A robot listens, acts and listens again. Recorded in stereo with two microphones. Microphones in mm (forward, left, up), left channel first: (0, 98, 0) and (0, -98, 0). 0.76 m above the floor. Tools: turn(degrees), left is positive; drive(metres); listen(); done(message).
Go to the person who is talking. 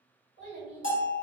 turn(degrees=70)
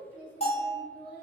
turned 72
drive(metres=1.0)
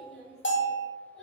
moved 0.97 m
drive(metres=1.0)
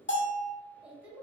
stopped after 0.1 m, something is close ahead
done("I am next to the child speaking.")